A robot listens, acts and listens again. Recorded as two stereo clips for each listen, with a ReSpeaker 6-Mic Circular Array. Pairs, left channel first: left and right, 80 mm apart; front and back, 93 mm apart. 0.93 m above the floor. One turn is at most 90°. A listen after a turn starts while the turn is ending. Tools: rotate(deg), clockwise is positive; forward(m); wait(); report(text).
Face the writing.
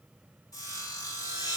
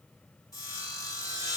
wait()
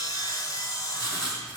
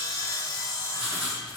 rotate(-90)
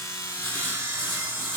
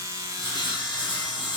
rotate(-20)
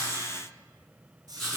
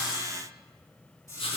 report("Found it: writing, straight ahead, over 4 m away.")